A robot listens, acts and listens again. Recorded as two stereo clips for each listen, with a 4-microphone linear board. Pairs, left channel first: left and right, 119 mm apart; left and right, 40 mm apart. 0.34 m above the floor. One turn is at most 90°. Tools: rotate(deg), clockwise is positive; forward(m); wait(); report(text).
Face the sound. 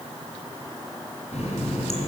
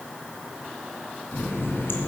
rotate(-75)
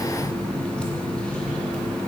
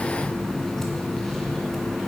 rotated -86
rotate(-10)
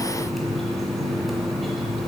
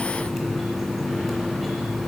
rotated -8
report("Facing the running tap.")